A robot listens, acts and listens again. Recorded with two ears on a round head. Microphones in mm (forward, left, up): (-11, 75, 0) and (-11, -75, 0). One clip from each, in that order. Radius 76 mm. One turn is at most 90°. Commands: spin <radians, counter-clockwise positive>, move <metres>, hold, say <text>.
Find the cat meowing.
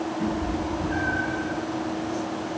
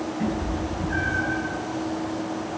spin -0.26
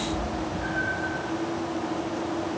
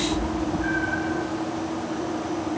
spin -1.57
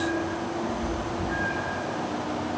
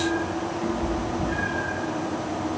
spin -1.31
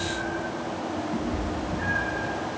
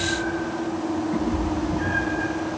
spin -0.17
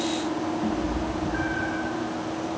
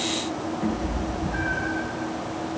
say Found it: a cat meowing, straight ahead.